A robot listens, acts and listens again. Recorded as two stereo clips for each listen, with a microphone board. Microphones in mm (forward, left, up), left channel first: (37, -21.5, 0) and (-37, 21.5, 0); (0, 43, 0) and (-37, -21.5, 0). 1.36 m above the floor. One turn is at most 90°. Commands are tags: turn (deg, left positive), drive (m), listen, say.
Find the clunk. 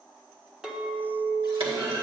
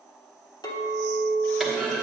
<turn deg="90"/>
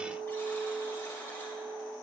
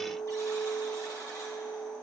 <turn deg="60"/>
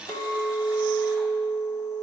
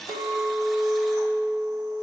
<say>Facing where the clunk came from. I can't hear it now.</say>